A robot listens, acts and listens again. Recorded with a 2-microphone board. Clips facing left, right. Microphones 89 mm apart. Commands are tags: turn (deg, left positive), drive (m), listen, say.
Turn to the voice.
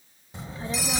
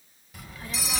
<turn deg="25"/>
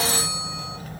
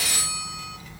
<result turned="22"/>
<turn deg="130"/>
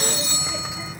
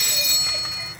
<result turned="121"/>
<say>Facing the child speaking.</say>